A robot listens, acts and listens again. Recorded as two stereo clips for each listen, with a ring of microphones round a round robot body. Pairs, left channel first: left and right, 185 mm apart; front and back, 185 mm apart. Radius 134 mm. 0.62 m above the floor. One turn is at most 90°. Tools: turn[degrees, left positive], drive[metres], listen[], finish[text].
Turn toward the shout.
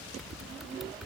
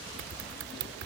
Action: listen[]
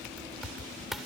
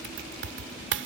Action: listen[]
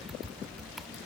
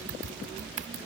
Action: finish[I can't make out a shout to turn to.]